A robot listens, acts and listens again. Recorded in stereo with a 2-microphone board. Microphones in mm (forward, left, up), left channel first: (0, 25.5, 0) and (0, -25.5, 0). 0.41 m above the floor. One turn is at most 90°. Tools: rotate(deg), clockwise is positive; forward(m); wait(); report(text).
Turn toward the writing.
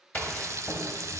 rotate(-35)
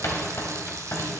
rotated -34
rotate(-90)
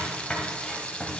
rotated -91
rotate(-15)
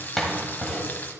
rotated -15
report("Found it: writing, straight ahead, 1 to 2 m away.")